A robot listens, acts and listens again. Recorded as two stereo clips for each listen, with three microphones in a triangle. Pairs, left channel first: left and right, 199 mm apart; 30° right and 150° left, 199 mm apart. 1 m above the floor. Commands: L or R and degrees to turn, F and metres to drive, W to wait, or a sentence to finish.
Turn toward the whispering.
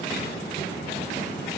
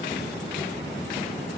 W
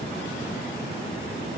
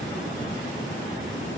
W
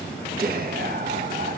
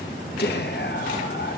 R55
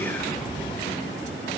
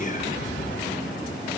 L10
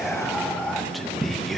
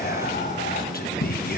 Found it: whispering, straight ahead, under 1 m away.